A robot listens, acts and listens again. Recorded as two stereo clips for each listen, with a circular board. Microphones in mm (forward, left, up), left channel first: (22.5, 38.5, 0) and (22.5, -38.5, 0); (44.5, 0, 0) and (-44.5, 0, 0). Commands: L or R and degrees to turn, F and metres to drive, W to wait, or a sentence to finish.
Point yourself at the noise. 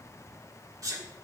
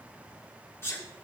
R55
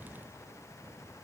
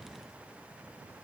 Facing where the sneeze came from. I can't hear it now.